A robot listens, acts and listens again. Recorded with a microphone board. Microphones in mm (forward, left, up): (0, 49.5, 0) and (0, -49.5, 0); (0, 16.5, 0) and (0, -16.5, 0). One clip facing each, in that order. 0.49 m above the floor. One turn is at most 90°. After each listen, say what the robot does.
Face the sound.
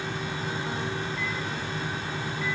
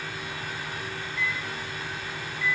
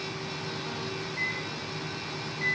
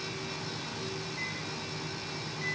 Turn 40° left.
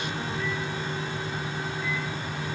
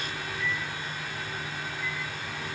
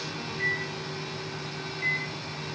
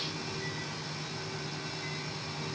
Turn 90° left.
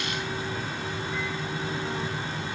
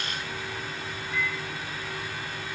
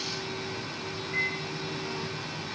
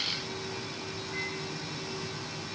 Turn 35° left.
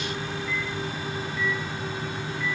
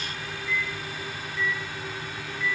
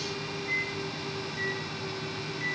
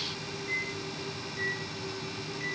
Facing the microwave, 1 to 2 m away.